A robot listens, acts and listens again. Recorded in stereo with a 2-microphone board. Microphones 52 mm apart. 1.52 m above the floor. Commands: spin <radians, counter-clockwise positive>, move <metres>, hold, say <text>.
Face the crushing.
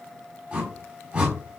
hold
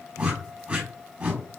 hold
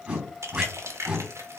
spin -1.13
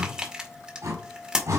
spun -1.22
spin -0.35
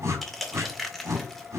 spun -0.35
say Found it: crushing, straight ahead.